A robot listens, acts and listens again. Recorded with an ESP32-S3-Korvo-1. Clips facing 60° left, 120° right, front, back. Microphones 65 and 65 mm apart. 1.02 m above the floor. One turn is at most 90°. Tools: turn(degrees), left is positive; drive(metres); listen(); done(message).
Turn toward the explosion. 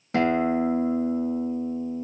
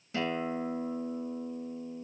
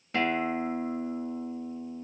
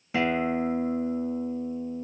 listen()
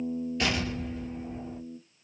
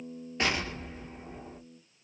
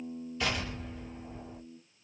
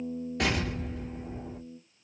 turn(degrees=-90)
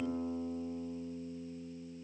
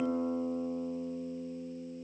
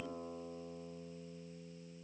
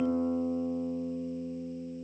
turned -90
turn(degrees=-85)
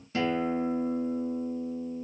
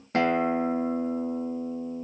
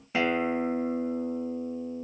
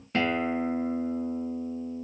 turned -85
done("Facing where the explosion came from. I can't hear it now.")